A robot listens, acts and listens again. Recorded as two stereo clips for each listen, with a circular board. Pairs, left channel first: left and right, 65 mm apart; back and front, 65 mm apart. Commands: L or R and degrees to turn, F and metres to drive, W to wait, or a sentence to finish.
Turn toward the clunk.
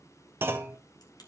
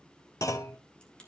R145
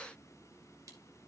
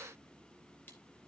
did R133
R10
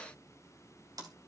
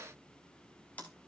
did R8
Facing where the clunk came from. I can't hear it now.